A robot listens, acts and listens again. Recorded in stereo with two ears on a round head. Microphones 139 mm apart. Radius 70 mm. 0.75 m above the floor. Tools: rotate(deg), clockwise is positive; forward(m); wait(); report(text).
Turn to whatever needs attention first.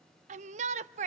rotate(45)
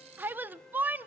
rotate(15)
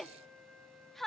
report("Facing the shout.")